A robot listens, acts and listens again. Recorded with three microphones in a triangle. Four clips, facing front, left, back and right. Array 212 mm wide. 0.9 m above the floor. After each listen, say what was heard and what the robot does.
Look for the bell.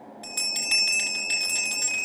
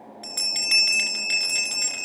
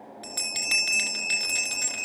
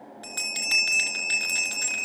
The bell: 175° right. Turn 175° right.
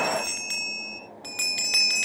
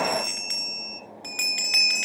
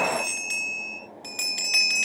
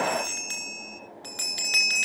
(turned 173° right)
Found it: a bell, straight ahead.